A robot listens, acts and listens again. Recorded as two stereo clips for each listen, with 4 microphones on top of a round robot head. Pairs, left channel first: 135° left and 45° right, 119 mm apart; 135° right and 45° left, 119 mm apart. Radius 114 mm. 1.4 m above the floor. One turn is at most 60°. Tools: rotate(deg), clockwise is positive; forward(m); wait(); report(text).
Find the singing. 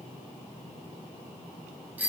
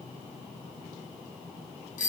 wait()
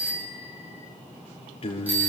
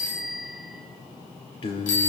rotate(-60)
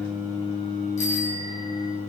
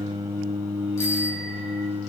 rotate(-60)
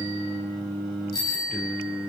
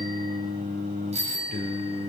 rotate(-50)
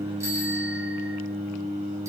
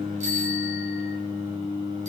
rotate(10)
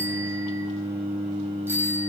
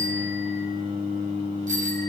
report("Facing the singing.")